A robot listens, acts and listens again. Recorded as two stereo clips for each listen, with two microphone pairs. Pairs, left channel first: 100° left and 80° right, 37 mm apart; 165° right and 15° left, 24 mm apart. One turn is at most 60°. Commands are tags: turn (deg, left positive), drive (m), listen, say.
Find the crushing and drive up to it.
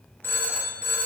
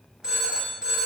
<listen/>
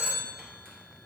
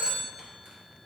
<listen/>
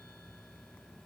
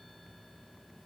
<say>I can't make out crushing to turn to.</say>